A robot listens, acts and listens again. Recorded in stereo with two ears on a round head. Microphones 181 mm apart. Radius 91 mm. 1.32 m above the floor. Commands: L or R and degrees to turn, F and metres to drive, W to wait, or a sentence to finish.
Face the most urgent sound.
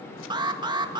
R20
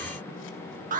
R135
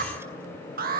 R45
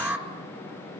R10
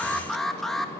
Facing the alarm.